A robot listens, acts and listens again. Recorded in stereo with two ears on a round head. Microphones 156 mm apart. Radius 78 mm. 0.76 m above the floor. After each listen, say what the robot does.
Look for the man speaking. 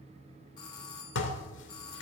Keep listening.
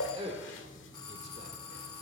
Turn 35° right.
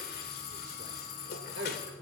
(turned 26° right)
Turn 105° right.
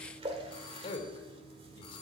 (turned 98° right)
Turn 30° left.
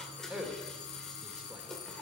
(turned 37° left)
Facing the man speaking.